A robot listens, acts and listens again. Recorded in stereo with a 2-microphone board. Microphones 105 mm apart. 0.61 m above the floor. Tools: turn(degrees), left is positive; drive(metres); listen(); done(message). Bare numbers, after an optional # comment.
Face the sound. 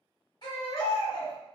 # The baby crying: about 45° left or 135° left.
turn(45)
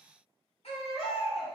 # So it is at 90° left.
turn(90)
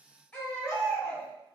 # The baby crying is now 15° left.
turn(15)
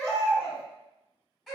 done("Facing the baby crying, 1 to 2 m away.")